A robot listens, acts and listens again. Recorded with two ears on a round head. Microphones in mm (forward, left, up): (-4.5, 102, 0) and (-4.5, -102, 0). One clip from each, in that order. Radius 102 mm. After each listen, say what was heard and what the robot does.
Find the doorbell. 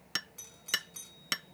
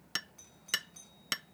The doorbell: about 30° left or 150° left. Turn 30° left.
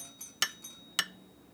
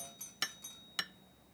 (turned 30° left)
Found it: a doorbell, straight ahead.